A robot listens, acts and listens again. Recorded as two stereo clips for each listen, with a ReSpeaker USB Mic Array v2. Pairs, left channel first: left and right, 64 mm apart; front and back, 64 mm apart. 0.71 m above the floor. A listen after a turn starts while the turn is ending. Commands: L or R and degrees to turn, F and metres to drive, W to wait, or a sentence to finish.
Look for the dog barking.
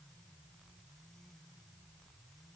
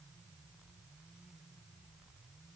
W
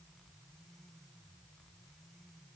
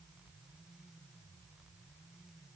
W
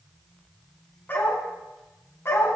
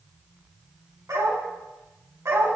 L135
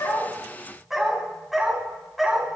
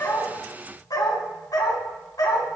Facing the dog barking, 2 to 4 m away.